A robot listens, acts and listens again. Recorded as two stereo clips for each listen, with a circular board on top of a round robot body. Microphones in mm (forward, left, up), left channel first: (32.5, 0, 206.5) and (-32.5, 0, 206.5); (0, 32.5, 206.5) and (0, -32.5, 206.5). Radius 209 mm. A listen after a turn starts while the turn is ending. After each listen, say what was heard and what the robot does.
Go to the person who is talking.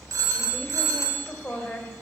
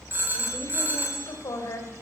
The woman speaking: 65° left. Turn 65° left.
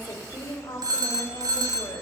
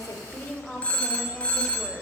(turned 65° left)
The woman speaking is now 15° left. Turn 15° left.
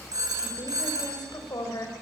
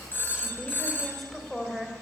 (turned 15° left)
Drive 1.0 m forward.
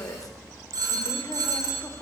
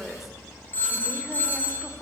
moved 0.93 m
Drive 1.0 m forward.
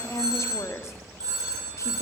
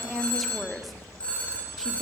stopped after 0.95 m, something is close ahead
I am next to the woman speaking.